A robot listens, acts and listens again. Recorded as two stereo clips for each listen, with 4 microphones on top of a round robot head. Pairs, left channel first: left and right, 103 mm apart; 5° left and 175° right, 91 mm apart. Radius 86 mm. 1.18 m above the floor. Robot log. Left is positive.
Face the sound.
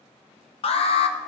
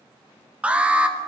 note: The alarm: 105° left.
cmd yaw +105
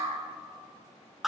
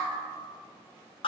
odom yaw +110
end: Found it: an alarm, straight ahead, under 1 m away.